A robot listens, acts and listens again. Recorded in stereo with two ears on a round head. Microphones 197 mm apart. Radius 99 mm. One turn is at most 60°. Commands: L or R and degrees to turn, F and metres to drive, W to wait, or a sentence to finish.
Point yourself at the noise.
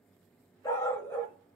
L30
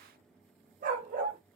R40
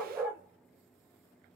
R10
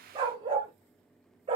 R25
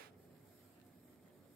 W
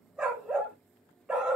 Found it: a dog barking, straight ahead.